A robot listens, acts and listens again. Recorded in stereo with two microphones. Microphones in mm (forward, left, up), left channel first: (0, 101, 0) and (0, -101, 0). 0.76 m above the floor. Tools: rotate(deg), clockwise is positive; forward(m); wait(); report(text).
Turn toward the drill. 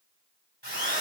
rotate(65)
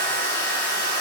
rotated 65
rotate(50)
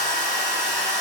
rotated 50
report("Facing the drill, over 4 m away.")